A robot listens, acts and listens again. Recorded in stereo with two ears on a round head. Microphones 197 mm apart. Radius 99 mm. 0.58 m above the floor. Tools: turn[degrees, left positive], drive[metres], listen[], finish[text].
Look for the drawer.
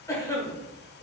Action: listen[]
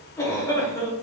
Action: listen[]
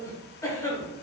Action: finish[I can't make out a drawer, only a cough.]